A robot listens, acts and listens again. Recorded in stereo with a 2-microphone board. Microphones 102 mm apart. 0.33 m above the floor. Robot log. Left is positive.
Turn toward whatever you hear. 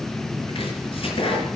note: The chopping: about 60° left or 120° left.
cmd yaw +60
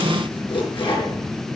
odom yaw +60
note: So it is at 60° left.
cmd yaw +60
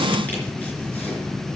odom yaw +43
note: Nothing new. It was at 15° left.
cmd yaw +15
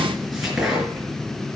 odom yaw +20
end: Found it: chopping, straight ahead, over 4 m away.